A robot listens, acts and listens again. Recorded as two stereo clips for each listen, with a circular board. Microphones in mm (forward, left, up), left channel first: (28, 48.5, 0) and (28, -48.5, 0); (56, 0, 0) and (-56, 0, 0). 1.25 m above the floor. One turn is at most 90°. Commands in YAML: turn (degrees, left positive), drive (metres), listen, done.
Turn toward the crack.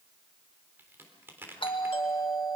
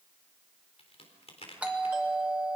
turn: -25
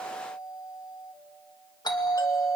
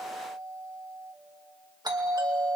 done: "I heard a crack from this way, but can't make it out now."